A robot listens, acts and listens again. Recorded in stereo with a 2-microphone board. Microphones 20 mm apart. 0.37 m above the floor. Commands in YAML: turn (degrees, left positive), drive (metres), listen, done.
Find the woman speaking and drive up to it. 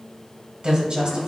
turn: -55
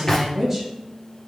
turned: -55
turn: -20
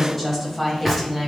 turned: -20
drive: 1.0
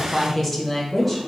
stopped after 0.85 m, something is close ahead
done: "Arrived at the woman speaking, straight ahead."